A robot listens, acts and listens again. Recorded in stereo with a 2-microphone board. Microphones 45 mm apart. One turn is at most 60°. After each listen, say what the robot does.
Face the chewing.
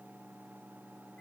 Keep listening.
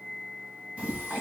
Turn 30° right.
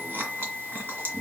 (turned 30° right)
Turn 60° right.
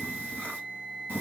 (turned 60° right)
Turn 55° right.
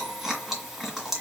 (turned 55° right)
Facing the chewing.